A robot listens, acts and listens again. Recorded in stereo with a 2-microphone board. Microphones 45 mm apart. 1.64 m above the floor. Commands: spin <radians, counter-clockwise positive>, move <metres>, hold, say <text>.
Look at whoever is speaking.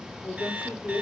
spin 0.61
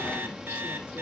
hold
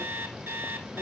hold
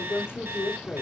spin 1.92
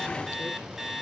hold
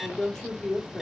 spin 0.17
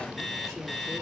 hold
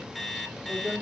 say Found it: a woman speaking, straight ahead, 2 to 4 m away.